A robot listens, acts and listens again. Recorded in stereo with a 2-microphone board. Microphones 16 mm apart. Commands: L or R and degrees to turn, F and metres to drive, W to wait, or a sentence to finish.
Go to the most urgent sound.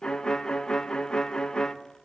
W
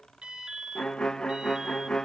R90
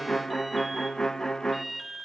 R10
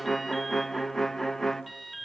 F1.0
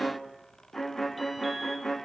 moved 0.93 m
W
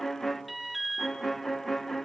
F1.0
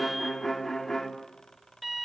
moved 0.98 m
F1.0
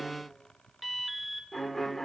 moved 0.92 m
F1.0
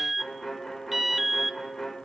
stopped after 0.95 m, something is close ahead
R15
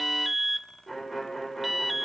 I am next to the alarm.